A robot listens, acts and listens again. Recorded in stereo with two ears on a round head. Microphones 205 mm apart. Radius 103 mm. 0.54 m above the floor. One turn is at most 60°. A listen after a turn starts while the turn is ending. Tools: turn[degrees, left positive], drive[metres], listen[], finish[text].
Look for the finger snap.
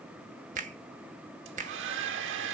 Thought: The finger snap: about 35° right or 145° right.
Action: turn[-35]
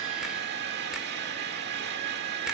Action: listen[]
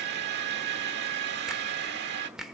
Action: finish[Facing the finger snap.]